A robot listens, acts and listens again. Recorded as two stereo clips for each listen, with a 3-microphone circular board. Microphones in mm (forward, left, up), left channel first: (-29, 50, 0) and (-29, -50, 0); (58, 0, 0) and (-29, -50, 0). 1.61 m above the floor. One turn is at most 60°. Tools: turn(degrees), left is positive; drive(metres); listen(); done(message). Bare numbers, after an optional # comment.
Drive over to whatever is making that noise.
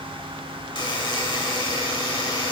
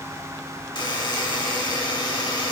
# The buzzer: 60° left.
turn(60)
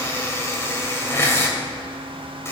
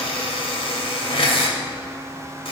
# The buzzer is now 30° left.
turn(30)
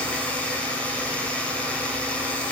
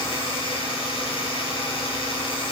# The buzzer is now 15° left.
turn(15)
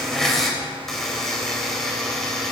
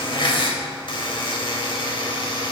drive(1.0)
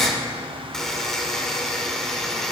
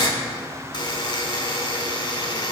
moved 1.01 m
drive(1.0)
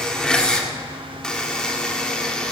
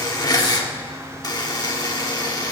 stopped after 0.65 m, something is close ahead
# The buzzer is now 15° left.
turn(15)
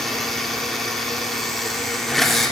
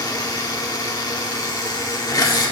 done("I am next to the buzzer.")